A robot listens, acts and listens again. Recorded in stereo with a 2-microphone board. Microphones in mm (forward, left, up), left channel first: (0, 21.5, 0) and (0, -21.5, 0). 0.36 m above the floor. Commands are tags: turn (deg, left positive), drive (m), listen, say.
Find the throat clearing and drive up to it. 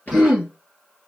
<turn deg="30"/>
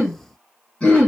<turn deg="145"/>
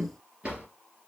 <listen/>
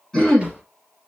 <turn deg="10"/>
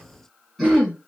<drive m="1.0"/>
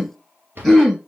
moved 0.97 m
<drive m="1.0"/>
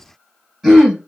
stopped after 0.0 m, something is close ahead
<turn deg="-10"/>
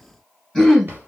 <say>I am next to the throat clearing.</say>